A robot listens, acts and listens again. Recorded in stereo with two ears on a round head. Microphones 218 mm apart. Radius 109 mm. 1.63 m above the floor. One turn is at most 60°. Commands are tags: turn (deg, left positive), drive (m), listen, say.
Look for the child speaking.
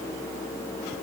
<listen/>
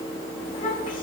<turn deg="20"/>
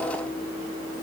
<listen/>
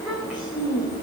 <say>Facing the child speaking, over 4 m away.</say>